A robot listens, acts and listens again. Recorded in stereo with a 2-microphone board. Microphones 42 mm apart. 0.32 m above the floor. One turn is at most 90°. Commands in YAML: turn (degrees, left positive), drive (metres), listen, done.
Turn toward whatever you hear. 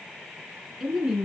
turn: -15
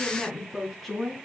turn: 30
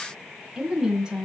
turn: -20
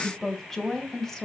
turn: 10
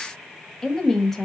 turn: 10
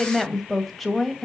done: "Found it: a woman speaking, straight ahead, 2 to 4 m away."